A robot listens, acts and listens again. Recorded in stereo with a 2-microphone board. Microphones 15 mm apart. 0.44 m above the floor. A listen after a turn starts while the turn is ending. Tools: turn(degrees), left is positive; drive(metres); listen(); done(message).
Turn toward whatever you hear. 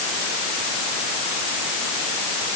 listen()
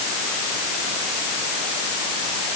listen()
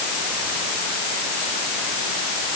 done("I can't make out anything to turn to.")